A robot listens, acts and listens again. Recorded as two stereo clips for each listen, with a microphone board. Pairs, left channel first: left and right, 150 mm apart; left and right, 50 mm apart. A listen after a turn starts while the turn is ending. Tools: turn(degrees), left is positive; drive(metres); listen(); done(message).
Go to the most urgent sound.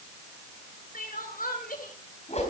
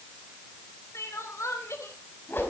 turn(degrees=70)
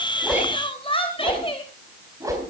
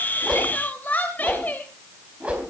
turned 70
turn(degrees=40)
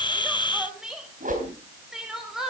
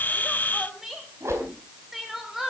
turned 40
drive(metres=1.0)
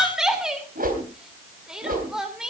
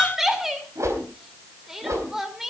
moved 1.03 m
drive(metres=1.0)
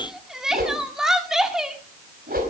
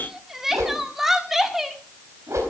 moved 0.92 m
drive(metres=1.0)
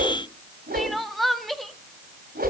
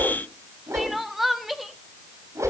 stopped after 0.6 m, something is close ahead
done("I am next to the crying.")